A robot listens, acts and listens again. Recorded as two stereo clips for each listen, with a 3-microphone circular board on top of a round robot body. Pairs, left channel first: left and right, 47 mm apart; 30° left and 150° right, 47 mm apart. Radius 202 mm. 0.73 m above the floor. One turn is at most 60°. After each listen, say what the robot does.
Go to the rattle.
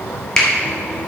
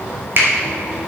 Keep listening.
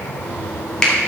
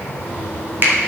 Keep listening.
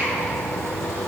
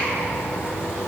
I can't make out a rattle, only a finger snap.